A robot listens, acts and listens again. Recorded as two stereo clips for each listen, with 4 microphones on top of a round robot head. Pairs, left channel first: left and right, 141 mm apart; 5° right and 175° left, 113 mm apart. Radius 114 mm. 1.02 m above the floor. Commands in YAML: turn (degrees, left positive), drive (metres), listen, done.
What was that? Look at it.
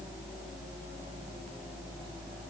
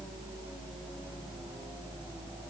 listen: true
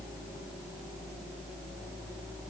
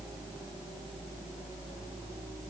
listen: true
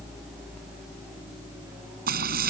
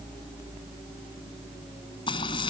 turn: -65
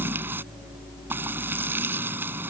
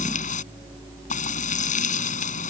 turn: -10
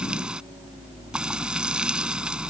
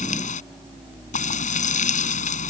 done: "Found it: frying, straight ahead."